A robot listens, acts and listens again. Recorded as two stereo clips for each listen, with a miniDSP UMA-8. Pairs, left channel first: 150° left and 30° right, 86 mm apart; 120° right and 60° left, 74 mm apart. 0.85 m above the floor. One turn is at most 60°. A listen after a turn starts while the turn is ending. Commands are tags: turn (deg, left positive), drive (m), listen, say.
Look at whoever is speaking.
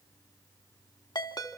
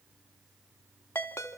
<listen/>
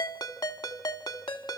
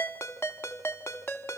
<listen/>
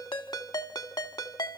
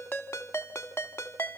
<say>I can't make out anyone speaking to turn to.</say>